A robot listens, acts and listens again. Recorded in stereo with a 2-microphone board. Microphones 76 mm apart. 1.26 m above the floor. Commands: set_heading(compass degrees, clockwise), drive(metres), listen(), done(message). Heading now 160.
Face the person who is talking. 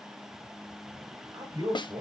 set_heading(225)
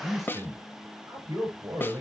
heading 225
set_heading(275)
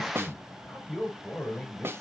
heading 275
set_heading(265)
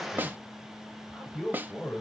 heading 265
done("Facing the man speaking, over 4 m away.")